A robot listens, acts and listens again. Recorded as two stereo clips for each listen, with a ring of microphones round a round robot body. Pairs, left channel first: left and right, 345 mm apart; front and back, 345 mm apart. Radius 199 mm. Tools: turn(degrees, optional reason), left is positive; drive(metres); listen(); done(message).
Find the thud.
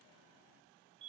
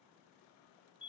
listen()
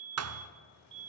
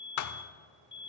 turn(degrees=-40, reason="The thud: 40° right.")
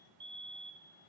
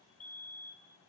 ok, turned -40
done("Facing where the thud came from. I can't hear it now.")